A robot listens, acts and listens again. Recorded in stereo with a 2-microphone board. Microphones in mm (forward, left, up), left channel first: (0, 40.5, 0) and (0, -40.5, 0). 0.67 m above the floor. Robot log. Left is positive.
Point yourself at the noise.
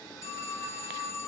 note: The phone ringing: about 40° left or 140° left.
cmd yaw +40
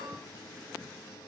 cmd idle
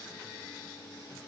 cmd idle
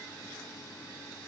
end: I heard a phone ringing, but can't make it out now. It was about straight ahead or 100° left.